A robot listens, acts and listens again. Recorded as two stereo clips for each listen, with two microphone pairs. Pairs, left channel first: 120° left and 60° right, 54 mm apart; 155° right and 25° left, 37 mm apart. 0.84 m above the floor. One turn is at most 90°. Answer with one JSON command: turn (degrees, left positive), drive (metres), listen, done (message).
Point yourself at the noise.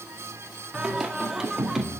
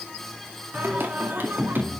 {"turn": 25}
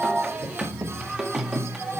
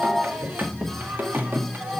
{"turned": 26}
{"turn": 25}
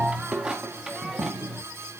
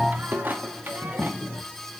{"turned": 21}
{"turn": 25}
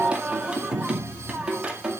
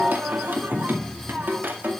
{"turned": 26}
{"turn": 10}
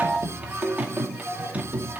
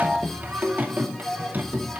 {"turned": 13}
{"done": "Facing the singing."}